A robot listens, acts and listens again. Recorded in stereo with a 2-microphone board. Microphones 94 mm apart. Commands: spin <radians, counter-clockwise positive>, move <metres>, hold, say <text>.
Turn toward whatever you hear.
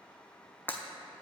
spin 0.35
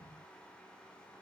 hold
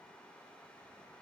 say I heard breaking glass, but can't make it out now. It was about straight ahead or 140° left.